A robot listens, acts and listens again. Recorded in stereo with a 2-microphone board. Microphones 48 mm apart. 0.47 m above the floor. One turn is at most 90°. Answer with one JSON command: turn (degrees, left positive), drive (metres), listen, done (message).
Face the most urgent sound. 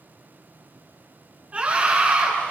{"turn": -30}
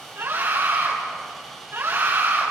{"turn": -90}
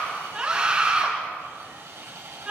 {"turn": -20}
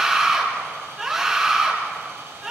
{"turn": -10}
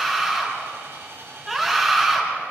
{"done": "Found it: a scream, straight ahead."}